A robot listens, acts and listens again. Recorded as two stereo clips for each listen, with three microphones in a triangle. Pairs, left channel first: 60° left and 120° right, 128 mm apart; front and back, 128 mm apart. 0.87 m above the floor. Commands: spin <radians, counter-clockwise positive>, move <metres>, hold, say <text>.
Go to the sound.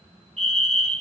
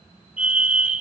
spin -1.75
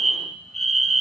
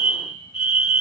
spin -0.52
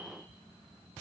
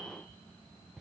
hold
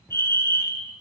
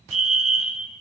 move 1.0
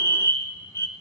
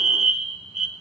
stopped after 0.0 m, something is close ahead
say Blocked. The fire alarm is further on, straight ahead.